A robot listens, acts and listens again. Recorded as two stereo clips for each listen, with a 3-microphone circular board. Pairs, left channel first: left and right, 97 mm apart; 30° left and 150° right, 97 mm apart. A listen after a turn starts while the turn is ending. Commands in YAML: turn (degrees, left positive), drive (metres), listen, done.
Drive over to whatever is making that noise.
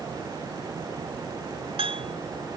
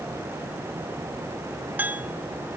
turn: -80
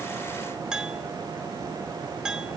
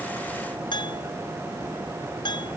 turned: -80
turn: -10
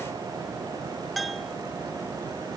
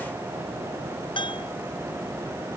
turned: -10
drive: 1.0
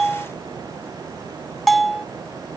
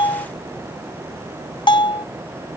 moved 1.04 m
drive: 1.0
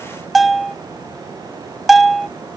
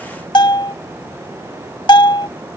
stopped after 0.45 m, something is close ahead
done: "I am next to the bell."